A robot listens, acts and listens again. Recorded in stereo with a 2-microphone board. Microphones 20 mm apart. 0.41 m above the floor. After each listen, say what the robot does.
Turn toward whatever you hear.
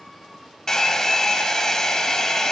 Turn 30° left.
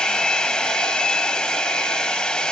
Turn 115° left.
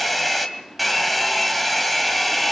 Found it: a hair dryer, straight ahead, 2 to 4 m away.